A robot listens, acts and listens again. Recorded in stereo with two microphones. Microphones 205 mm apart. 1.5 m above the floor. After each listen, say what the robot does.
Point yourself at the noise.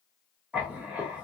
Turn 30° right.
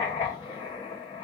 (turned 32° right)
Turn 25° left.
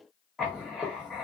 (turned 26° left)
Found it: writing, straight ahead.